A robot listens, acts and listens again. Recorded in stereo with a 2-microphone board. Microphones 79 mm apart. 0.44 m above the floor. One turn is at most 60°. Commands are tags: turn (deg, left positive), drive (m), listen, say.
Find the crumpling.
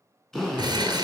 <turn deg="-60"/>
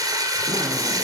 <turn deg="-50"/>
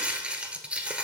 <turn deg="-15"/>
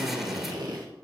<listen/>
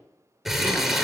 <say>Found it: crumpling, straight ahead.</say>